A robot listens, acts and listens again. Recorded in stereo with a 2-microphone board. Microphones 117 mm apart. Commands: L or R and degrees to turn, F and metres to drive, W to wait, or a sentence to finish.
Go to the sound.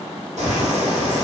R90
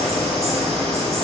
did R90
F1.0
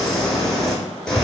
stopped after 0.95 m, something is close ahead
Arrived at the bird, straight ahead.